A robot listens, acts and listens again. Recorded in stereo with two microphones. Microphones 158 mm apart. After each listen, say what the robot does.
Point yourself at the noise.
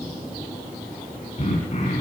Turn 45° left.
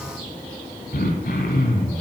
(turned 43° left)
Turn 90° left.
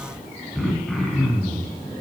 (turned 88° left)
Found it: throat clearing, straight ahead.